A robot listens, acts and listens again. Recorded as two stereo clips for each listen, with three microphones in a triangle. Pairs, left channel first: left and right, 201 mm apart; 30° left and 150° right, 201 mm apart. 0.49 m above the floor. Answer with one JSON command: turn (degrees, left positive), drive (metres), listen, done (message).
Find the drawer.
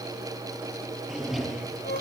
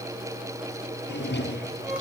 {"done": "Found it: a drawer, straight ahead, 2 to 4 m away."}